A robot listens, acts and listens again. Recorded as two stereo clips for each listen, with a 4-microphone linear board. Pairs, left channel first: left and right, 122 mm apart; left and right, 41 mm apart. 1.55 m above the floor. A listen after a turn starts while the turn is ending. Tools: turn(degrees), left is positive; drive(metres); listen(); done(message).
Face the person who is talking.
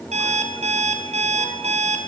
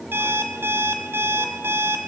listen()
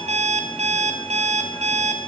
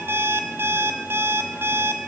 listen()
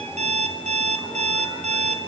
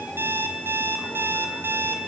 done("I can't make out anyone speaking to turn to.")